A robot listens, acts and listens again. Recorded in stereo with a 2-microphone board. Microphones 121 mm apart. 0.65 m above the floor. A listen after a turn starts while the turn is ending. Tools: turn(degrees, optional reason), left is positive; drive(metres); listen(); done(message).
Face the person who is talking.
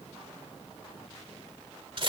listen()
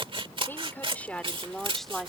turn(degrees=30)
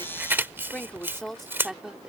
turn(degrees=-30)
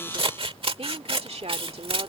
turn(degrees=-120, reason="So it is at 120° right.")
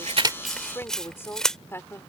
turn(degrees=20, reason="The woman speaking is now 20° left.")
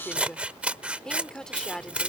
done("Found it: a woman speaking, straight ahead.")